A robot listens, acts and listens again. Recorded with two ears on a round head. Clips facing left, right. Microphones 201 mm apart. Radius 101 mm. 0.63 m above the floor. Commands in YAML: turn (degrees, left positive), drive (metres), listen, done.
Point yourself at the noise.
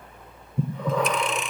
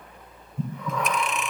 turn: 30
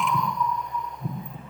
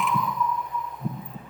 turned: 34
done: "Facing the breathing."